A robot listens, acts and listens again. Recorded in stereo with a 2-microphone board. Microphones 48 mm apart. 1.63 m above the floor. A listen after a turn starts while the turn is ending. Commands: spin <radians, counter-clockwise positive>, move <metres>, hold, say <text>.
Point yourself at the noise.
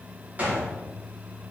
spin -0.52
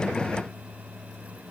hold
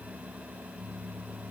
say I heard a gunshot, but can't make it out now. It was about straight ahead or 120° right.